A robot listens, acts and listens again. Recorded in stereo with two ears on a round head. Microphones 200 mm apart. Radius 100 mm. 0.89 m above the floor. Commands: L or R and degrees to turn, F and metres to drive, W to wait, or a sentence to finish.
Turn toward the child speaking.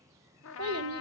R90
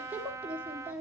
Facing the child speaking, 1 to 2 m away.